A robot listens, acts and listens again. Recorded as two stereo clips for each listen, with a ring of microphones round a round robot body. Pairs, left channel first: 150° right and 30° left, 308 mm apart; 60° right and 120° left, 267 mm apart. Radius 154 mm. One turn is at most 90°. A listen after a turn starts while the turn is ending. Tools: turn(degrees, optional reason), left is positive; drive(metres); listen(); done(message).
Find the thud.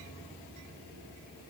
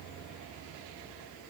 listen()
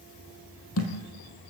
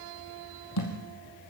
turn(degrees=-90, reason="The thud: 105° right.")
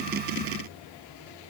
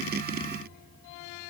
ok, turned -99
done("I heard a thud from this way, but can't make it out now.")